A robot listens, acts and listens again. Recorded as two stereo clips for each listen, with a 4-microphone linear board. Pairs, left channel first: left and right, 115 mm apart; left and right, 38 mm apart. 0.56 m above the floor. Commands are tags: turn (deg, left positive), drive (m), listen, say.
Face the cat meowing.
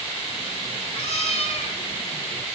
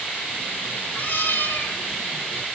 <turn deg="70"/>
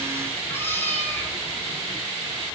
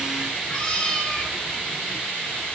<turn deg="15"/>
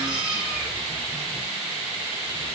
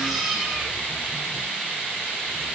<turn deg="-10"/>
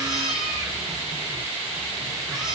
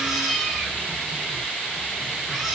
<say>Found it: a cat meowing, straight ahead, over 4 m away.</say>